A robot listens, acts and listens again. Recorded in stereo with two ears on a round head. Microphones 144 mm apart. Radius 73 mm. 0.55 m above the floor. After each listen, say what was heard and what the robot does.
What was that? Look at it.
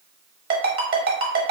The ringtone: about 65° right or 115° right. Turn 65° right.
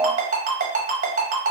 So it is at 45° right. Turn 45° right.
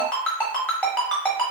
Facing the ringtone.